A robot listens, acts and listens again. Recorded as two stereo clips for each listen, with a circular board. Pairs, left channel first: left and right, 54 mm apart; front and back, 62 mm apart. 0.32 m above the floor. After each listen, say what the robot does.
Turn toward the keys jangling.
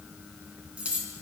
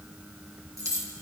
Turn 155° right.
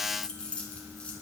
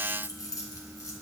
Turn 20° left.
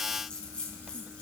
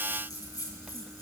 Turn 20° left.
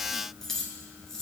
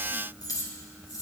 Turn 10° left.
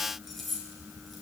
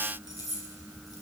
Found it: keys jangling, straight ahead, 2 to 4 m away.